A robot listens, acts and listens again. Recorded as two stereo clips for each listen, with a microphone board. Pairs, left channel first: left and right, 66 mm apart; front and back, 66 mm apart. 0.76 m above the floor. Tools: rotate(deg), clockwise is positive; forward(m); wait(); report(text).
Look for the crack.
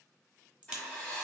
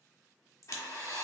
rotate(20)
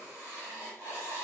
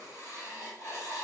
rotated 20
report("I heard a crack from this way, but can't make it out now.")